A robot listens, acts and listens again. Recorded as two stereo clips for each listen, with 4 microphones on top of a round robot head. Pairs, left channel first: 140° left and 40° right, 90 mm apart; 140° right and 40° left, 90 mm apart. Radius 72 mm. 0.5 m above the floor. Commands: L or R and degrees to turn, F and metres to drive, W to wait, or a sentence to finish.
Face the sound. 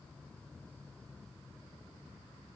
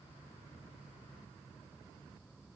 W
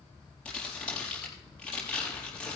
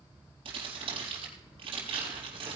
L65
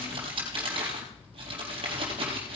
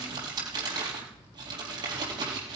Found it: crumpling, straight ahead, over 4 m away.